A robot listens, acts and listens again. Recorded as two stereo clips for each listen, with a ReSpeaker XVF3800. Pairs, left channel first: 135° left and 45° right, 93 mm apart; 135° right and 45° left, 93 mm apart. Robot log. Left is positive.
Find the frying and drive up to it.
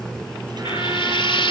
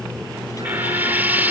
note: The frying: 115° left.
cmd yaw +115
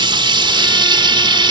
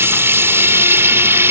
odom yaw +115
note: The frying is now 20° right.
cmd yaw -20
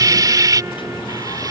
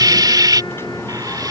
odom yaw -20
cmd fwd 1.0
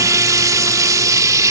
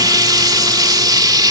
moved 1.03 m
cmd fwd 1.0
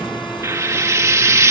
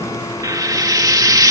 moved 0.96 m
cmd fwd 1.0
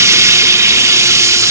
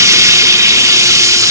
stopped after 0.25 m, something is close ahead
end: Arrived at the frying, straight ahead.